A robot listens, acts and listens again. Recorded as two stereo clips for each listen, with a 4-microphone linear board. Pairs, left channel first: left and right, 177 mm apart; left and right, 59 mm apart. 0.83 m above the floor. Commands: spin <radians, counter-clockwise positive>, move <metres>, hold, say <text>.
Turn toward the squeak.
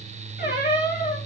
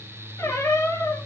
spin 1.22
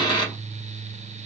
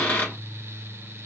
spin 0.52
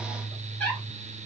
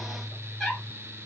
spin 0.17
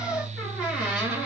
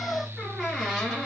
say Found it: a squeak, straight ahead, 2 to 4 m away.